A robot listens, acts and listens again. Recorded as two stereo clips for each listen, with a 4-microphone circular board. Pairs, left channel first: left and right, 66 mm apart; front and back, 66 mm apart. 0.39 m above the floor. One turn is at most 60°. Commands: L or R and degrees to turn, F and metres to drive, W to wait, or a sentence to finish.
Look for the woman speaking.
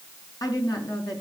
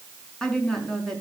L60
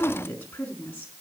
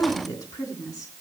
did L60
L30
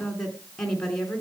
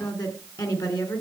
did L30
L10
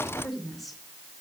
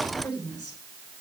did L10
Facing the woman speaking.